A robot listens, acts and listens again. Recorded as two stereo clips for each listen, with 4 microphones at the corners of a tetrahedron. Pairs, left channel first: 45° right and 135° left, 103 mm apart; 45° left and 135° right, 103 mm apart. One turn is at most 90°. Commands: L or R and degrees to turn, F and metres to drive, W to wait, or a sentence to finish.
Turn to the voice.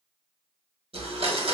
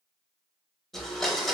W
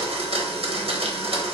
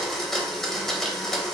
W
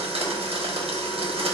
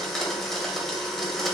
I can't make out anyone speaking to turn to.